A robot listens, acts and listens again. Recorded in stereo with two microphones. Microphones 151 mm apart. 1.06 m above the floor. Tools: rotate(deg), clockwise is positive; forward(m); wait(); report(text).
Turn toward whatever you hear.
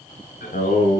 rotate(-90)
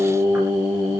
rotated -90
rotate(20)
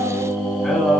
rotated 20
report("Found it: singing, straight ahead.")